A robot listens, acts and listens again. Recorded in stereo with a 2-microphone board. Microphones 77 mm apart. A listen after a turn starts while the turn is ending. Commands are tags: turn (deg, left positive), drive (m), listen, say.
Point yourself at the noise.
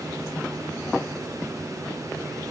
<listen/>
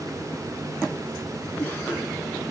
<turn deg="25"/>
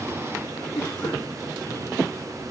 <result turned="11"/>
<turn deg="145"/>
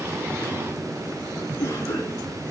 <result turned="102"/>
<turn deg="40"/>
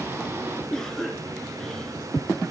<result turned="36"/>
<say>Facing the cough.</say>